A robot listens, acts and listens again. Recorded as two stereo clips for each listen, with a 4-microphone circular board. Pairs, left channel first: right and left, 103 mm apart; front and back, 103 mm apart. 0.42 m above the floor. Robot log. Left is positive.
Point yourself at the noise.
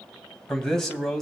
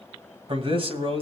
note: The man speaking: 175° right.
cmd yaw -175
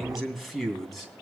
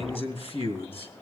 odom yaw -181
end: Found it: a man speaking, straight ahead, 2 to 4 m away.